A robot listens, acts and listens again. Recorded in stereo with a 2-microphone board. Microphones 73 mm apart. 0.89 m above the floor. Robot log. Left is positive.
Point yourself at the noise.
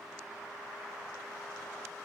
cmd idle
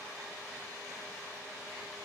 cmd idle
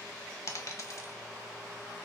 note: The dropped coin: about 50° left or 130° left.
cmd yaw +50
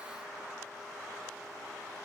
cmd idle
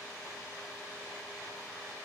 end: I heard a dropped coin, but can't make it out now. It was about straight ahead or 80° left.